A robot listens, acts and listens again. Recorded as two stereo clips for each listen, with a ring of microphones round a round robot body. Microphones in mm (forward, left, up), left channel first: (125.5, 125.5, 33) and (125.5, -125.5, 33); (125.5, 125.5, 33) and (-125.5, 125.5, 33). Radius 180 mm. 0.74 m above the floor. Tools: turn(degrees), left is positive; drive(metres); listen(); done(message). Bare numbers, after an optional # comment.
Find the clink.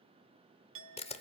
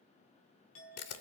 # The clink: 55° right.
turn(-55)
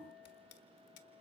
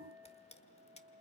# The clink is now 10° right.
turn(-10)
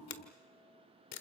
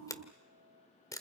listen()
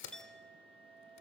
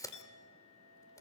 done("Found it: a clink, straight ahead.")